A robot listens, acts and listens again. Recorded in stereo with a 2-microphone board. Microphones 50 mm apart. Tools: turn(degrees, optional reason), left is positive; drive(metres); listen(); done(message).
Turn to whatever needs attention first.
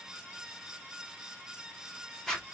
listen()
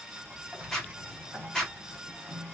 listen()
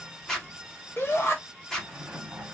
turn(degrees=50, reason="The shout: about 50° left or 130° left.")
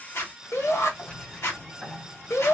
turn(degrees=80, reason="So it is at 80° left.")
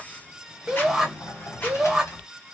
done("Found it: a shout, straight ahead, 1 to 2 m away.")